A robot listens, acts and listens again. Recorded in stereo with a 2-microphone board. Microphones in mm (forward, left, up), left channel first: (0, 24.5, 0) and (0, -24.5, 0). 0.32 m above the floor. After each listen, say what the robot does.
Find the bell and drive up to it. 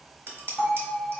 Turn 30° left.
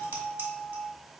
Turn 20° right.
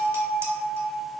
Drive 1.0 m forward.
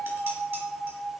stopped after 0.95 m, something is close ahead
I am next to the bell.